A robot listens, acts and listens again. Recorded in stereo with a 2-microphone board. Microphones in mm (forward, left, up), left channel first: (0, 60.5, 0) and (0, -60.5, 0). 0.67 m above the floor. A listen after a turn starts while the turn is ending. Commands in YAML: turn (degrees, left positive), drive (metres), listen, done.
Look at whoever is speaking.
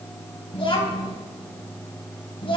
turn: 50
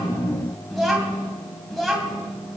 done: "Found it: a child speaking, straight ahead, 2 to 4 m away."